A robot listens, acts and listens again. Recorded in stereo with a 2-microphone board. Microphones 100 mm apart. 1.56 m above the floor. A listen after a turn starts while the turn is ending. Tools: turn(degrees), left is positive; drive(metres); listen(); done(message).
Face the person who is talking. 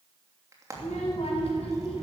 turn(degrees=90)
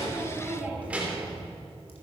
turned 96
turn(degrees=-15)
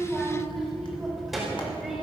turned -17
done("Found it: a child speaking, straight ahead.")